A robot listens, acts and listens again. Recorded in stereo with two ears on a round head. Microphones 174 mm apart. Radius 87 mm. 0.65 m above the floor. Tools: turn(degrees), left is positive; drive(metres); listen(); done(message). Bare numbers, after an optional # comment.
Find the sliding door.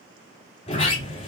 # The sliding door: about 35° left or 145° left.
turn(35)
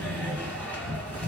# So it is at 10° left.
turn(10)
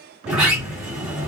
done("Facing the sliding door, 1 to 2 m away.")